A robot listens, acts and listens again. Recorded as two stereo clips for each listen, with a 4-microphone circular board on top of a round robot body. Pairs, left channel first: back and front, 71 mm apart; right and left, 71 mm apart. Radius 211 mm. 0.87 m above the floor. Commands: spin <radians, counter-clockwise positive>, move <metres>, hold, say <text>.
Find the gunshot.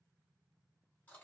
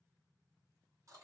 hold
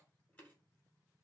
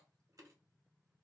hold
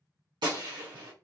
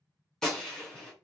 say Facing the gunshot.